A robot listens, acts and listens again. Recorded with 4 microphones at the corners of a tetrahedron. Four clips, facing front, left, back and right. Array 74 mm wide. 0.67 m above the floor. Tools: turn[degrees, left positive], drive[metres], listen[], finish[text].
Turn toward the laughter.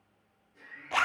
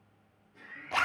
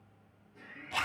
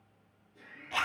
Thought: The laughter: 110° left.
Action: turn[110]
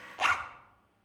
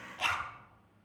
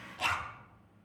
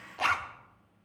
Action: listen[]
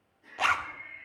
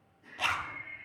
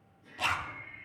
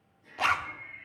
Thought: The laughter is now 50° left.
Action: turn[50]
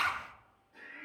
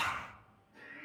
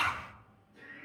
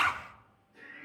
Thought: The laughter is now 10° left.
Action: turn[10]
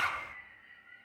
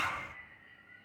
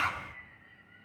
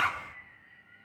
Thought: The laughter is now 10° left.
Action: turn[10]
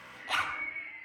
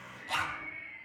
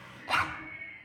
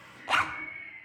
Action: finish[Facing the laughter.]